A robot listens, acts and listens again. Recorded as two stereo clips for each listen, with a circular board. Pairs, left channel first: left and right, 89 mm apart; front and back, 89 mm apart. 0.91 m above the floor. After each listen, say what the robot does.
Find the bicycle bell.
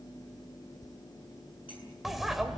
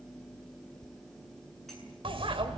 Turn 180° left.
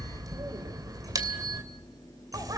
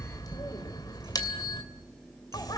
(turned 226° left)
Turn 45° right.
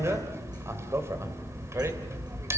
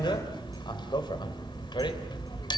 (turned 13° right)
Turn 30° right.
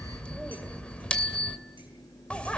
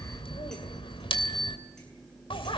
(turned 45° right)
Turn 15° left.
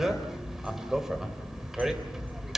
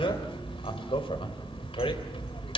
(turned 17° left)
Found it: a bicycle bell, straight ahead, 2 to 4 m away.